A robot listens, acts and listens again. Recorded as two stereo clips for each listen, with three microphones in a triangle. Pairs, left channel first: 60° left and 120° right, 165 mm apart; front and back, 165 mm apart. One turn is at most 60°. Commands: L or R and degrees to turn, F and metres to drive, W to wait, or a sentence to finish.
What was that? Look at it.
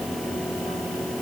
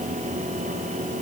W
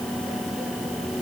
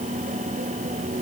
W
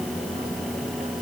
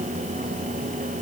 I can't make out anything to turn to.